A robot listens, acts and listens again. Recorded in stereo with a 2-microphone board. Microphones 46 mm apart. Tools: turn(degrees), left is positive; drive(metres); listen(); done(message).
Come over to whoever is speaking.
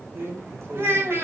turn(degrees=-65)
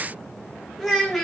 drive(metres=1.0)
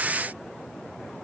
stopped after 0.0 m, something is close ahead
listen()
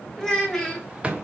turn(degrees=10)
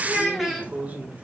done("Something is in my way. I am facing the child speaking but have not reached it.")